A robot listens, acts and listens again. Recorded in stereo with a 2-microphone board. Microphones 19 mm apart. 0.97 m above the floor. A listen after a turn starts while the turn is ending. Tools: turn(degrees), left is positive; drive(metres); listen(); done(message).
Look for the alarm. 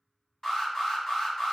turn(degrees=30)
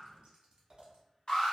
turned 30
turn(degrees=120)
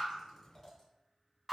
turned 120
turn(degrees=-15)
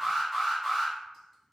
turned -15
done("Found it: an alarm, straight ahead, 1 to 2 m away.")